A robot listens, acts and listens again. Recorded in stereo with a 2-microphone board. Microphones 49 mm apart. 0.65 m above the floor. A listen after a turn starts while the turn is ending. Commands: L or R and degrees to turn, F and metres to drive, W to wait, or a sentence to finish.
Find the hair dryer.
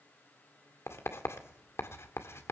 W
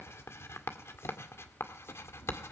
W
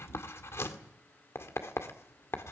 I can't make out a hair dryer, only writing.